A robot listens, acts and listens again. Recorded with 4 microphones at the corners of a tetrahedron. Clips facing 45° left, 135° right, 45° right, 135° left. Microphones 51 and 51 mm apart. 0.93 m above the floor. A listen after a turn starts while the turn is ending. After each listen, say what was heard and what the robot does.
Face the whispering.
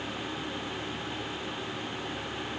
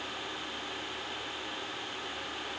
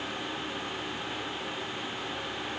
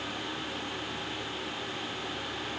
Keep listening.
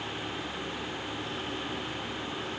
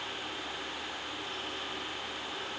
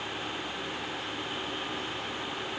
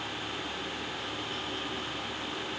Keep listening.
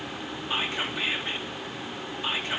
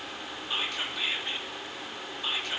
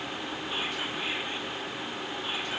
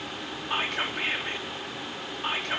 The whispering: 110° left. Turn 110° left.
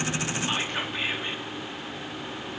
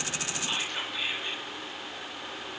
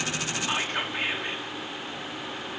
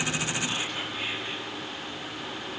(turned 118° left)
The whispering is now 10° right. Turn 10° right.
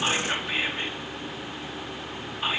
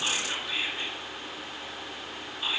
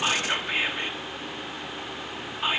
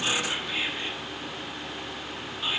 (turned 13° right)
Facing the whispering.